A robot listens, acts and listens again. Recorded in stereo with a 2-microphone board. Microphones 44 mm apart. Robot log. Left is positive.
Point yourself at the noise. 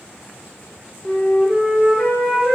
note: The flute: about 25° left or 155° left.
cmd yaw +25
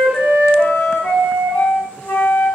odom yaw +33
note: So it is at 120° left.
cmd yaw +120
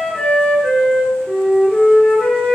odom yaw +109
note: The flute is now 15° left.
cmd yaw +15
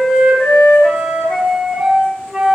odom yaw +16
end: Facing the flute, 1 to 2 m away.